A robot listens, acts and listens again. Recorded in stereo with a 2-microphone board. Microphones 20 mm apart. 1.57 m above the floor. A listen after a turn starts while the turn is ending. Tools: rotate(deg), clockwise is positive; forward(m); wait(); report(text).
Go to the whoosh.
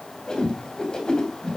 rotate(-35)
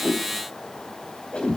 rotate(-105)
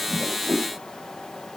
forward(1.0)
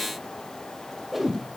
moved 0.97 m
rotate(10)
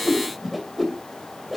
forward(1.0)
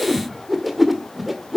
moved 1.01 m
forward(1.0)
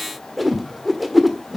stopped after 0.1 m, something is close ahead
report("I am next to the whoosh.")